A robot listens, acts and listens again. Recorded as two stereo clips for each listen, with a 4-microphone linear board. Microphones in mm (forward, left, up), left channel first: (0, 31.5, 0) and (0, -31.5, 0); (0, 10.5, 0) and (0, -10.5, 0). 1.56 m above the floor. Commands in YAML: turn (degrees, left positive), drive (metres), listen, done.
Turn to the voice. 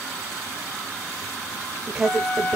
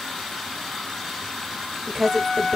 turn: -30
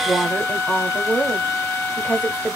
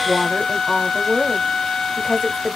turn: 20
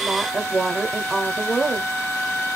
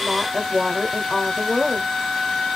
done: "Found it: a woman speaking, straight ahead."